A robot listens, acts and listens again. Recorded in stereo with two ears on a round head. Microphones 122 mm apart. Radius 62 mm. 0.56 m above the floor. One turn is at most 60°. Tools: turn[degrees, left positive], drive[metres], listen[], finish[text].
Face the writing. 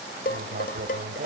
Thought: The writing: about 55° right or 125° right.
Action: turn[-55]
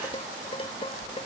Action: listen[]
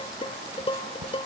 Action: listen[]
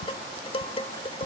Action: finish[I heard writing, but can't make it out now. It was about straight ahead or 70° right.]